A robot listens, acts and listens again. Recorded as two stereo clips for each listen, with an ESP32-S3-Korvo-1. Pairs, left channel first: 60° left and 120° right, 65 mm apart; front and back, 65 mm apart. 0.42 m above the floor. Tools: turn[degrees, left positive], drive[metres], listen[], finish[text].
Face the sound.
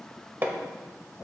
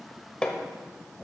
Thought: The hammering: 75° right.
Action: turn[-75]
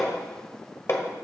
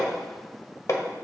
Thought: The hammering is now 20° left.
Action: turn[20]
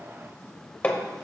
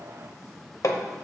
Action: finish[Facing the hammering.]